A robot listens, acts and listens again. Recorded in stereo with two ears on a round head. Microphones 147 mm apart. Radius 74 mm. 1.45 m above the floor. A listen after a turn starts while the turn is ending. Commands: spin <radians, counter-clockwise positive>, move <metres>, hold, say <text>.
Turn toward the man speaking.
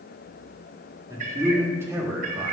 spin -0.52
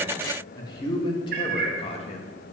spin 0.70
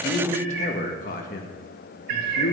spin 1.22
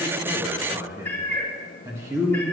spin -0.26
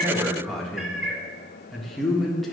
say Found it: a man speaking, straight ahead.